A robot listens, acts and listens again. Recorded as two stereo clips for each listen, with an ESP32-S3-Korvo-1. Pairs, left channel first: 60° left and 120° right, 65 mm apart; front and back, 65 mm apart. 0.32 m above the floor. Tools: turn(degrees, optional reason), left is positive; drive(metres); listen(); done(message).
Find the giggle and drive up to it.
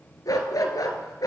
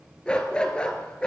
listen()
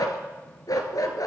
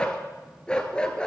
listen()
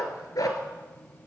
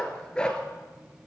done("I can't make out a giggle, only a dog barking.")